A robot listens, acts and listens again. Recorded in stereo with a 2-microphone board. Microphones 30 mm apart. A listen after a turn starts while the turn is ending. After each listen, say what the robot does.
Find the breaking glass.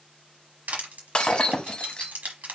Turn 30° left.
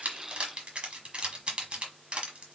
Keep listening.
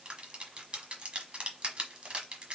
I heard breaking glass, but can't make it out now. It was about straight ahead or 120° left.